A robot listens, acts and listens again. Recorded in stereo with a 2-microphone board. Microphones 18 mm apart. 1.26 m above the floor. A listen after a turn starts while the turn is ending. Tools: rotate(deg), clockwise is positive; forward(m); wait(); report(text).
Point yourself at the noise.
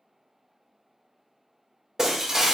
rotate(30)
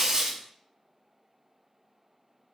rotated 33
wait()
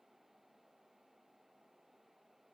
report("I heard breaking glass, but can't make it out now. It was about straight ahead or 115° right.")